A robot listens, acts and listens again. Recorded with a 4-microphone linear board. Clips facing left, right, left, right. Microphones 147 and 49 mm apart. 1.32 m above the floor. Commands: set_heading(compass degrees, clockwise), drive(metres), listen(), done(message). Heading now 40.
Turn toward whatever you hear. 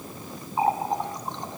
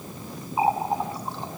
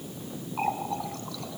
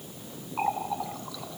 set_heading(70)
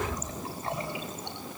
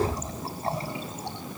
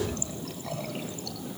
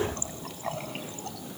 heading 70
set_heading(215)
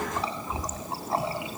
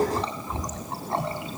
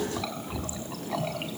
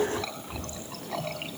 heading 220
done("Found it: a running tap, straight ahead.")